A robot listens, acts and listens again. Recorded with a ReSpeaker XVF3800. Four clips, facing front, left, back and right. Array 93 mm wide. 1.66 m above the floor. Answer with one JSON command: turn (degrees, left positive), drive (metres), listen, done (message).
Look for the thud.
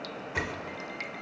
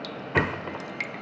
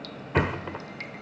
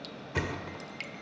{"turn": 135}
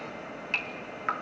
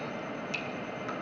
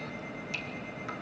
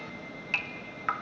{"done": "Facing where the thud came from. I can't hear it now."}